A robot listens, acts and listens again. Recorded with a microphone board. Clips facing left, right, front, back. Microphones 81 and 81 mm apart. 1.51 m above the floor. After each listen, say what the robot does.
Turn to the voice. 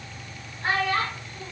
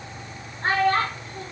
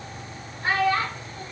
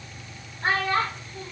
Turn 135° right.
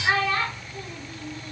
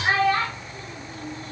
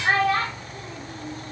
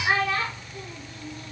Turn 30° right.
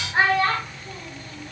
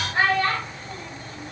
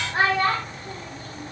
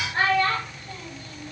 Turn 30° left.
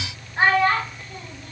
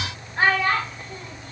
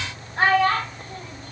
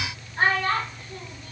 Found it: a child speaking, straight ahead.